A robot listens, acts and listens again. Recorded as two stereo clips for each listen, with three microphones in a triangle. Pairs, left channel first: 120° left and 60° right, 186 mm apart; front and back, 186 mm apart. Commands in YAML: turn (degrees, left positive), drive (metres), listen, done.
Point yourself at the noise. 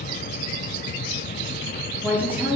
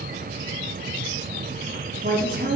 turn: -140
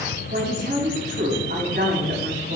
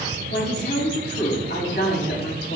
turn: -30
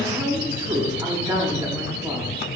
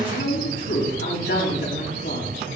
turn: 10
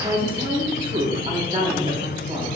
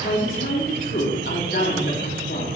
done: "Facing the woman speaking."